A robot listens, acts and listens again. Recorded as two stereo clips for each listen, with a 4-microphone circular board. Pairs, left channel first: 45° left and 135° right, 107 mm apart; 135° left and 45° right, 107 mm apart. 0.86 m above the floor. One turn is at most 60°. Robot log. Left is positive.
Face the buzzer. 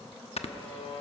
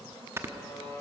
note: The buzzer: 70° left.
cmd yaw +60
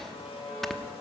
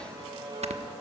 end: Found it: a buzzer, straight ahead.